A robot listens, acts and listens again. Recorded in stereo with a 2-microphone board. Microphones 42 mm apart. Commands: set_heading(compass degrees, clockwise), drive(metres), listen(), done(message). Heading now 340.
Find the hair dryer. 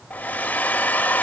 set_heading(300)
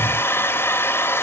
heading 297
set_heading(202)
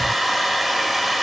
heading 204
done("Facing the hair dryer, under 1 m away.")